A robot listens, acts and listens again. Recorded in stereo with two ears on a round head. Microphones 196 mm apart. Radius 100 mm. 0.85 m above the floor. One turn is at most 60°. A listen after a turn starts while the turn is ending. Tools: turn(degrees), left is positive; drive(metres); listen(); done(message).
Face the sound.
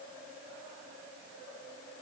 listen()
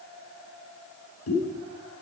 turn(degrees=60)
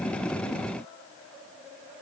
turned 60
turn(degrees=30)
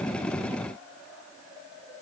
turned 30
done("Facing where the pop came from. I can't hear it now.")